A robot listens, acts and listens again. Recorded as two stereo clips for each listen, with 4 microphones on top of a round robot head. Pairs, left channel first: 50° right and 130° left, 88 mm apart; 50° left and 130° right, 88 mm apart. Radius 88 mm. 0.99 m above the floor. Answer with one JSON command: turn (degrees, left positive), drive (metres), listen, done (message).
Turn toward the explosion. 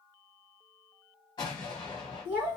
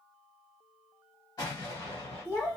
{"done": "Facing the explosion."}